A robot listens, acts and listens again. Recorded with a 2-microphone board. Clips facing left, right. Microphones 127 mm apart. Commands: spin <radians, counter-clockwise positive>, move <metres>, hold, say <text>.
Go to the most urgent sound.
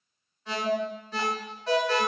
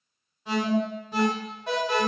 spin -0.26
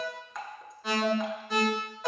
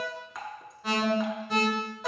move 1.0
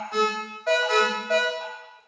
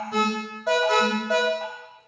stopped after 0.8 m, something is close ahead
spin -0.17
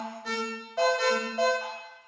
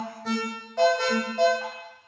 say I am next to the alarm.